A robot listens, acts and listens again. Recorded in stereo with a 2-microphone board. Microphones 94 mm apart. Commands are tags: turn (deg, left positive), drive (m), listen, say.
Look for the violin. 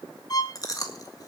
<turn deg="40"/>
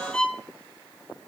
<turn deg="10"/>
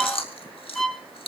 <say>Found it: a violin, straight ahead.</say>